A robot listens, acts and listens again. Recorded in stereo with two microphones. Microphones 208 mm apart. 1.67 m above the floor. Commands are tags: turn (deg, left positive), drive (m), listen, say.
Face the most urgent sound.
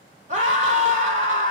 <turn deg="-35"/>
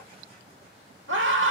<turn deg="-110"/>
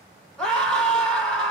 <say>Found it: a scream, straight ahead.</say>